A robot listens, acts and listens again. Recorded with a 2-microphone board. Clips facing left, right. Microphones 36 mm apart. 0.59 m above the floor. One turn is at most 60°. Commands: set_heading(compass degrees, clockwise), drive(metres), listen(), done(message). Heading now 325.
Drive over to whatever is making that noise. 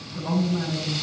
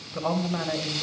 set_heading(25)
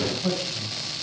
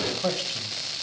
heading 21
set_heading(76)
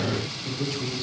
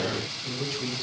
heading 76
drive(1.0)
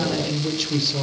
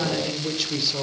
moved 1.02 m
drive(1.0)
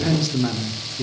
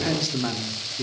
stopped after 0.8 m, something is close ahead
done("Arrived at the man speaking, straight ahead.")